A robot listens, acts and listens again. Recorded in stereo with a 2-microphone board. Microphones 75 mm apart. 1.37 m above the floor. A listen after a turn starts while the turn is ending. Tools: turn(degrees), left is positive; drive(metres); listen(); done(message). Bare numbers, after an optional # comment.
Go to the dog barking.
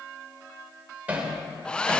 listen()
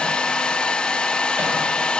listen()
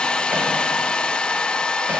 done("I can't make out a dog barking, only hammering and a hair dryer.")